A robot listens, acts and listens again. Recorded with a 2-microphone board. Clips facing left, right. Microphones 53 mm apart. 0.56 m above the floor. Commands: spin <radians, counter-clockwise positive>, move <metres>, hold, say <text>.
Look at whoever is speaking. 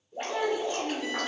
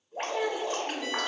spin 0.87
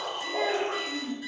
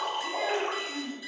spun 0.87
spin 1.22
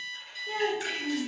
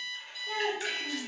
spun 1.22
spin 0.35
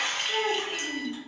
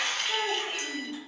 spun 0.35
say Found it: a child speaking, straight ahead, under 1 m away.